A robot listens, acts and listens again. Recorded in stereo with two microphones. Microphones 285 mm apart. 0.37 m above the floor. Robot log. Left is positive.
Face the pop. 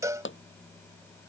note: The pop: about 45° left or 135° left.
cmd yaw +45
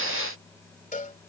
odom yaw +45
cmd idle
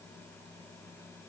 end: I heard a pop, but can't make it out now. It was about straight ahead or 90° left.